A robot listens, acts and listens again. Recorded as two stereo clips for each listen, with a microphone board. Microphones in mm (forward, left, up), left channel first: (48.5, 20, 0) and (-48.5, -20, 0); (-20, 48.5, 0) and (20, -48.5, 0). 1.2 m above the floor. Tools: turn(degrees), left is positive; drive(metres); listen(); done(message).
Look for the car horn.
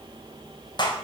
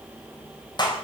listen()
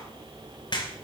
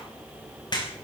listen()
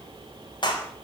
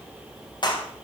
done("I can't make out a car horn to turn to.")